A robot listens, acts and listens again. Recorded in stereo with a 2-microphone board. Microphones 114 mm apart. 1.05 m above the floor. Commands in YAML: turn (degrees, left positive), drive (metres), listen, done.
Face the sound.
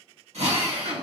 turn: -90
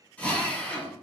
turn: 15
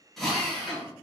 done: "Facing the drill."